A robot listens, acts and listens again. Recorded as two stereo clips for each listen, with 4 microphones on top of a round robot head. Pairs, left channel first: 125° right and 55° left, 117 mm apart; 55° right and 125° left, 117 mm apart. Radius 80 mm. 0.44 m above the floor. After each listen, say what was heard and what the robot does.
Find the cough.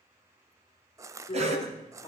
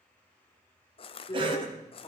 The cough: 80° left. Turn 80° left.
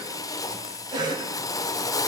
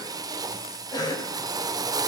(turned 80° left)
Found it: a cough, straight ahead, 2 to 4 m away.